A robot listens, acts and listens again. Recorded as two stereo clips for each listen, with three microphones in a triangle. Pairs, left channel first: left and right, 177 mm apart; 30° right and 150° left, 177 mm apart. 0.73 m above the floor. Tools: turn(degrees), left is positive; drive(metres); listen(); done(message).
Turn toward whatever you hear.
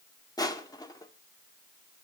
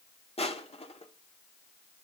turn(degrees=20)
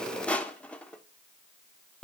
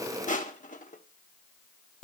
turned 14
done("Facing the crushing, 1 to 2 m away.")